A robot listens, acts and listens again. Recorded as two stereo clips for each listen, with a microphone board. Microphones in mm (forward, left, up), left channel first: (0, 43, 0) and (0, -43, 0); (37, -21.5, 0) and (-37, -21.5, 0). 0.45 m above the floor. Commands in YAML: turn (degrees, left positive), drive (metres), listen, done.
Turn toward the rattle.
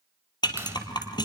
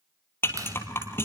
turn: 55
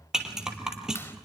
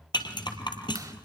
done: "Found it: a rattle, straight ahead, 2 to 4 m away."